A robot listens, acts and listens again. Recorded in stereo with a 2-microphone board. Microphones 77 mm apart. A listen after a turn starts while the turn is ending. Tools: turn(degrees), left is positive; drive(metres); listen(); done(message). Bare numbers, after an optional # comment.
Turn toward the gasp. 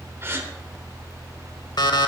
# The gasp: about 30° right or 150° right.
turn(-30)
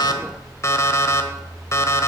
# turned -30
listen()
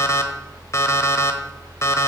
done("I heard a gasp, but can't make it out now. It was about straight ahead or 120° right.")